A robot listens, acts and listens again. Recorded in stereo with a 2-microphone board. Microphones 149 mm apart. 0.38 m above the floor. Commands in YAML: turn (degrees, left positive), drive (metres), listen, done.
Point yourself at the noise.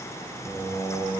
turn: 20
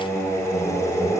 turn: 15
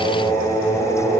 turn: 15
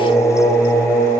turn: 30
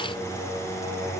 turn: -15
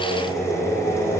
done: "Found it: singing, straight ahead, 2 to 4 m away."